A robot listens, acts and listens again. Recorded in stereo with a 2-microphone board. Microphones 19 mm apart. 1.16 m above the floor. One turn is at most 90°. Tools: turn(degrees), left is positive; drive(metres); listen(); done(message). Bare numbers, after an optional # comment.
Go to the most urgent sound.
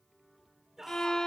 # The shout: about 25° right or 155° right.
turn(-25)
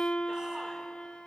listen()
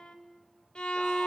listen()
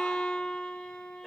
done("I heard a shout, but can't make it out now. It was about straight ahead or 130° right. I did not reach it.")